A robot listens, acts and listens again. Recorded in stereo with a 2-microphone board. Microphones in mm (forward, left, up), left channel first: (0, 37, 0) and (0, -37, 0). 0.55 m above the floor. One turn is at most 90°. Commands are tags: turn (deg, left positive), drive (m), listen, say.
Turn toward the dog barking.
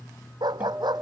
<turn deg="-75"/>
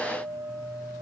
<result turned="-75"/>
<listen/>
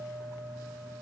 <listen/>
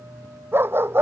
<turn deg="-30"/>
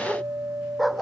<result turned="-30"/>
<say>Facing the dog barking.</say>